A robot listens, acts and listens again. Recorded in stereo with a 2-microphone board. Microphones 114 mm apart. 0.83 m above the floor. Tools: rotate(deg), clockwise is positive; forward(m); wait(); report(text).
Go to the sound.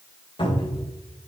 rotate(-45)
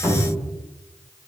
forward(1.0)
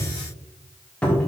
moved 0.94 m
rotate(-10)
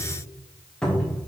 forward(1.0)
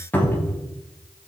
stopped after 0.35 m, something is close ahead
rotate(-15)
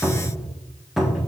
report("I am next to the cupboard door.")